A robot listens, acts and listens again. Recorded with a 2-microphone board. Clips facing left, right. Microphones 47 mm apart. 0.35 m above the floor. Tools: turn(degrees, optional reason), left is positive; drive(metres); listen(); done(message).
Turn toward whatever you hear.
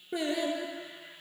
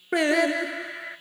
turn(degrees=-90)
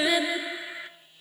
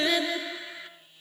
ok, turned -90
turn(degrees=20, reason="So it is at 20° left.")
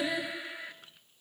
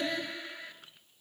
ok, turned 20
turn(degrees=10, reason="The singing is now 10° left.")
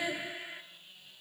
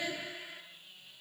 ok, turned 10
turn(degrees=15, reason="The singing is now 15° left.")
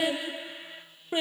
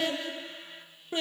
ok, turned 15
turn(degrees=20, reason="The singing is now 20° left.")
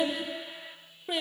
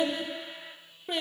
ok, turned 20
done("Found it: singing, straight ahead, 2 to 4 m away.")